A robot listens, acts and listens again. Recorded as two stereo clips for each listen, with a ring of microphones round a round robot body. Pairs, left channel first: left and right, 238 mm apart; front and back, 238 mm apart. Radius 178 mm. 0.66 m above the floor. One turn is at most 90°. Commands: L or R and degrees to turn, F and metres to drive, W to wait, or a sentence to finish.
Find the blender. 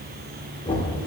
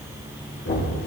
W
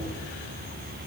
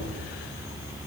W
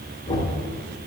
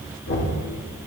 I can't make out a blender to turn to.